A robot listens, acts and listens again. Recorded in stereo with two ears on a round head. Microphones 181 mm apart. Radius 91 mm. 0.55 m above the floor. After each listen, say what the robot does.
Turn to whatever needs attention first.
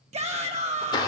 Turn 35° right.
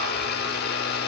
Keep listening.
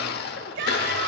Turn 105° right.
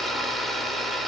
Keep listening.
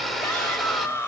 Turn 10° left.
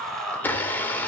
Found it: a shout, straight ahead, 2 to 4 m away.